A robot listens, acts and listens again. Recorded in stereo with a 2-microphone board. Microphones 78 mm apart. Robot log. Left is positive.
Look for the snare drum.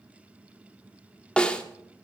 cmd yaw +30
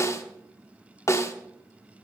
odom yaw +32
note: So it is at 135° left.
cmd yaw +135
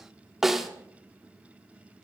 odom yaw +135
end: Facing the snare drum.